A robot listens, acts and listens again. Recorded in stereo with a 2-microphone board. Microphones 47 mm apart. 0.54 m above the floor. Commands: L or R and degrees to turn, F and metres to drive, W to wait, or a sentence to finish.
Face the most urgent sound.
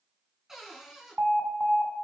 R50
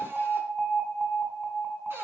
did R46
R10
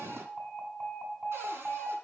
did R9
Facing the alarm.